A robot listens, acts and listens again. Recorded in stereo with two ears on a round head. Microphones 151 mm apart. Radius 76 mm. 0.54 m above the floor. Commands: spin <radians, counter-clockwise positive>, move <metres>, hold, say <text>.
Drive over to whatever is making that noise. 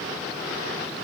hold
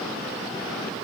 hold
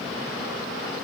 say I can't make out anything.